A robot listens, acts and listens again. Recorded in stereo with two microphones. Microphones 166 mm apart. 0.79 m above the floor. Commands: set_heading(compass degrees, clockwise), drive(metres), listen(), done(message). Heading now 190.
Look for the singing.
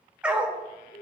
listen()
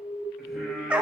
set_heading(160)
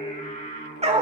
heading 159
set_heading(14)
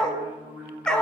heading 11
set_heading(21)
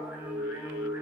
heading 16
set_heading(31)
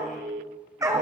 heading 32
listen()
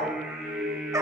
set_heading(42)
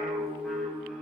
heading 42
done("Found it: singing, straight ahead, 2 to 4 m away.")